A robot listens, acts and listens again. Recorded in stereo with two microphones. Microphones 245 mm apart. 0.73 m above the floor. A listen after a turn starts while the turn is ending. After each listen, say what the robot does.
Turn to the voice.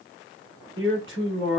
Turn 55° right.
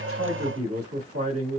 Turn 70° right.
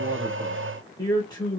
Turn 15° left.
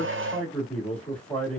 Facing the man speaking.